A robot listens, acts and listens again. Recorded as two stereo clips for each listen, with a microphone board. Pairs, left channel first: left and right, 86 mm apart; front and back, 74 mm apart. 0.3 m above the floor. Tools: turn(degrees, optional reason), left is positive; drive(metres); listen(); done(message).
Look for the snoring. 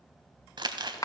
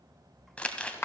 listen()
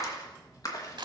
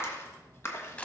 listen()
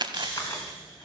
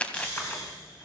turn(degrees=-10, reason="The snoring: 10° right.")
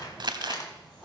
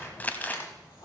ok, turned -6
listen()
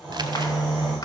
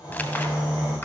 done("Facing the snoring.")